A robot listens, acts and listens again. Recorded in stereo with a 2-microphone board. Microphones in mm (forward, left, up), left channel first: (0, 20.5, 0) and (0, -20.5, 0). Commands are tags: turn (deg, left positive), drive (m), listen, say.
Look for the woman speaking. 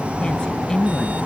<turn deg="20"/>
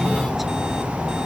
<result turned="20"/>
<listen/>
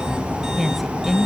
<say>Found it: a woman speaking, straight ahead.</say>